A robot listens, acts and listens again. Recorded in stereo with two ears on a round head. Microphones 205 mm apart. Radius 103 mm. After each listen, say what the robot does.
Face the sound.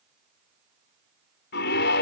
Turn 45° left.
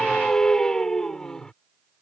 Facing the scream.